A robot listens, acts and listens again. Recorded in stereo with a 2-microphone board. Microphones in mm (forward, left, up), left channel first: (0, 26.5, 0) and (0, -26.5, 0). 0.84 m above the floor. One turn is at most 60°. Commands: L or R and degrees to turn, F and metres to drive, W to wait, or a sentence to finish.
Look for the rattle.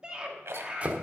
R60
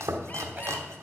W
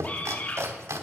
W
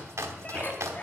I heard a rattle, but can't make it out now. It was about 5° right or 55° right.